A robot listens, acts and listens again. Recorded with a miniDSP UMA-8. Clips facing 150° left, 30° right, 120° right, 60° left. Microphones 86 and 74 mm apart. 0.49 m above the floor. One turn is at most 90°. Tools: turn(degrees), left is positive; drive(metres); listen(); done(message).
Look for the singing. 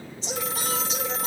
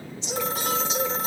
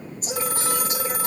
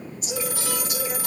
turn(degrees=-90)
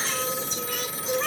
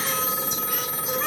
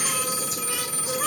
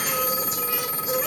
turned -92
turn(degrees=-90)
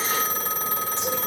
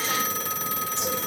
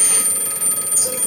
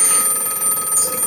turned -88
turn(degrees=-25)
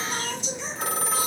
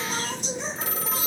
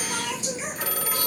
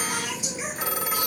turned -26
turn(degrees=-15)
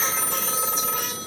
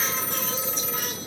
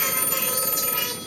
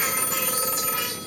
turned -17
listen()
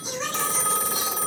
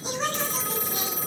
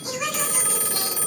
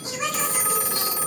done("Found it: singing, straight ahead.")